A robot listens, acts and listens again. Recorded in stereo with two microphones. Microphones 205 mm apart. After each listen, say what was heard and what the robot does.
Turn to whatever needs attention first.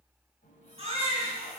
The baby crying: about 25° right or 155° right. Turn 25° right.
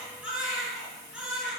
Facing the baby crying.